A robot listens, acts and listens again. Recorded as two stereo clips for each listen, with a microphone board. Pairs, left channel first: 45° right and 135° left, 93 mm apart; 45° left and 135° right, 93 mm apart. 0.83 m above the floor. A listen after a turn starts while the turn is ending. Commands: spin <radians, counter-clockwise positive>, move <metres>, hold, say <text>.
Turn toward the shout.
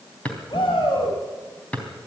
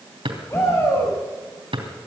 spin -0.26
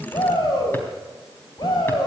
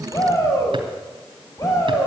say Found it: a shout, straight ahead, over 4 m away.